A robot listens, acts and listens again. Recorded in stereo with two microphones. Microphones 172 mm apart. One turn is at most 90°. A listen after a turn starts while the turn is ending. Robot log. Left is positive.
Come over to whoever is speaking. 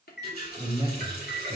note: The man speaking: about 30° right or 150° right.
cmd yaw -30
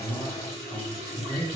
cmd fwd 1.0
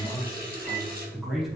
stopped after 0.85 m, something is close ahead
end: Arrived at the man speaking, straight ahead.